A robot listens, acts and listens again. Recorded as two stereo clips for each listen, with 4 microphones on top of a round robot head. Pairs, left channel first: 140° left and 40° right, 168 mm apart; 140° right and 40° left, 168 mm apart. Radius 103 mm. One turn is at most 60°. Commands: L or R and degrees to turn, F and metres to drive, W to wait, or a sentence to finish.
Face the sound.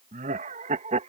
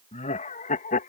R60
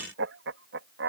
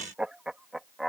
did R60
R50
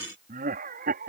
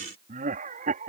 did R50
Facing the laughter.